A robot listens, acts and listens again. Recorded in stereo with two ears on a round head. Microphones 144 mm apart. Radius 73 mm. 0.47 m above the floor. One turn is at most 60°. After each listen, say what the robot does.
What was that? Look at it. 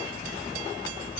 Keep listening.
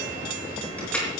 Turn 30° left.
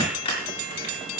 Turn 60° left.
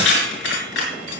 Turn 60° left.
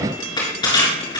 Turn 25° left.
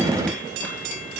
Keep listening.
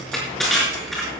Found it: crushing, straight ahead.